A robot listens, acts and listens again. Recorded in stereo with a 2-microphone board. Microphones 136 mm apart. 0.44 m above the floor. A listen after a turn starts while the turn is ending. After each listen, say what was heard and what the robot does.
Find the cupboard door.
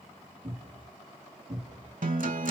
The cupboard door: about 65° right or 115° right. Turn 65° right.
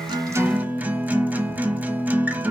Keep listening.
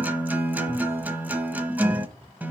So it is at 50° right. Turn 50° right.
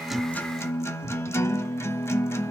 The cupboard door is now 15° right. Turn 15° right.
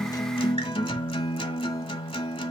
Keep listening.
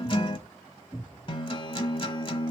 Found it: a cupboard door, straight ahead.